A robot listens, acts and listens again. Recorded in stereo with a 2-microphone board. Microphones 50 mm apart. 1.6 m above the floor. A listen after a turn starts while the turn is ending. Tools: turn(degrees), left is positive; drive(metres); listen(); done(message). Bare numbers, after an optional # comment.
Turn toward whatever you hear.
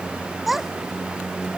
turn(-30)
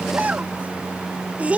# So it is at 155° right.
turn(-155)
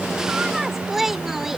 done("Found it: a child speaking, straight ahead.")